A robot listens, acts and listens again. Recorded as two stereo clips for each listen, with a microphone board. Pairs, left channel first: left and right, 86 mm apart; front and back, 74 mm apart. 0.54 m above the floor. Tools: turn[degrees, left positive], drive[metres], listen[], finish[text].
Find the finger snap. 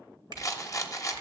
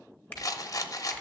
Thought: The finger snap: 70° right.
Action: turn[-70]
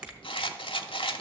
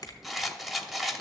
Thought: The finger snap is now 20° right.
Action: turn[-20]
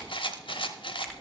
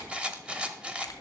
Action: listen[]
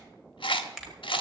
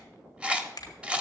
Action: finish[Found it: a finger snap, straight ahead.]